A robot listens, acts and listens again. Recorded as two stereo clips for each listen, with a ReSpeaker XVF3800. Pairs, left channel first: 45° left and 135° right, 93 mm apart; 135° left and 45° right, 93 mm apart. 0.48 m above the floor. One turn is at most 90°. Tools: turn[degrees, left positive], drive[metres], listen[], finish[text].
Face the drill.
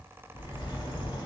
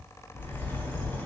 Action: listen[]
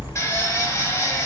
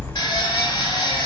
Thought: The drill: 100° left.
Action: turn[90]
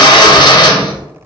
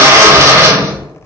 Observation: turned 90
Thought: The drill is now 10° left.
Action: turn[10]
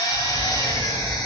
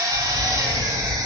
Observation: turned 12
Action: listen[]
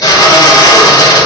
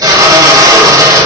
Action: finish[Found it: a drill, straight ahead, under 1 m away.]